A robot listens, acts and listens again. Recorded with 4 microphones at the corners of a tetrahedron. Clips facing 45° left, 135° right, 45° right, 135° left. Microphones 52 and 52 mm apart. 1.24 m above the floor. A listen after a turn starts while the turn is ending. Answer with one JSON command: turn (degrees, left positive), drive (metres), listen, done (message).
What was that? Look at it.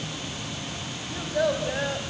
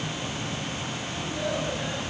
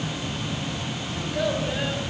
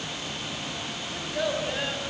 {"turn": 50}
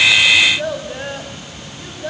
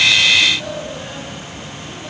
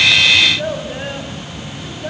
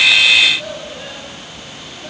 {"turn": 10}
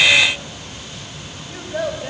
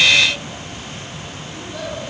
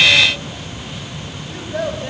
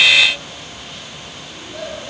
{"done": "Found it: a child speaking, straight ahead, over 4 m away."}